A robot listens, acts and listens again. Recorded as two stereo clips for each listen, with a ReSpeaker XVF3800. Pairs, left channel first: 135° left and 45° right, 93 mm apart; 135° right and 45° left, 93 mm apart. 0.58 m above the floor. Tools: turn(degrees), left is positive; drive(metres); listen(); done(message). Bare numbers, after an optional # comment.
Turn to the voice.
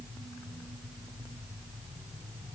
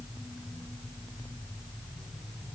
listen()
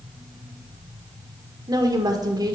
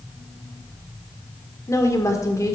# The woman speaking: 85° right.
turn(-85)
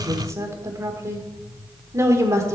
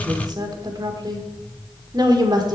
# The woman speaking is now 10° left.
turn(10)
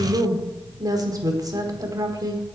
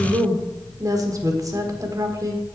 done("Found it: a woman speaking, straight ahead.")